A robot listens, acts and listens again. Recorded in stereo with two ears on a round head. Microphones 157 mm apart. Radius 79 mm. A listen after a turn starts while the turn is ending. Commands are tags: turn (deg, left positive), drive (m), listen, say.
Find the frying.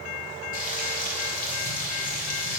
<turn deg="50"/>
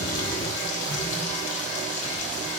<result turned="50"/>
<turn deg="75"/>
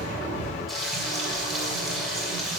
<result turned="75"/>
<say>Found it: frying, straight ahead.</say>